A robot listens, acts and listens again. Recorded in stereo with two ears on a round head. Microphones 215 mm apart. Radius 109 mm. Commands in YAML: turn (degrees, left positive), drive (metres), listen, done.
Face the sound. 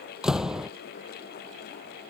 turn: 30
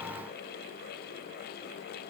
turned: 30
listen: true
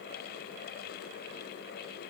done: "I heard a door slam, but can't make it out now. It was about 30° right or 150° left."